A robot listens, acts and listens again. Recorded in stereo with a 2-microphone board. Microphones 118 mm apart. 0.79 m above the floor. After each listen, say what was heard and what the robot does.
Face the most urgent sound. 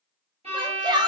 The shout: about 35° right or 145° right. Turn 35° right.
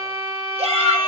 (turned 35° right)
So it is at 100° right. Turn 100° right.
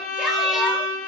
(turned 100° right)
Keep listening.
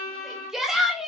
Facing the shout, 1 to 2 m away.